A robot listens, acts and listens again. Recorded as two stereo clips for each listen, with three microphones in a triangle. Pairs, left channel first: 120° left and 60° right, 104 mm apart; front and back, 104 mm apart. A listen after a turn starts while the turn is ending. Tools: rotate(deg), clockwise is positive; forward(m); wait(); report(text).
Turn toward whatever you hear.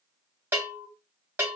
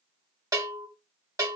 rotate(130)
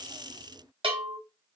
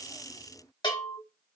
rotate(40)
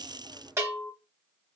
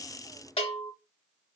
report("Found it: a bell, straight ahead, 1 to 2 m away.")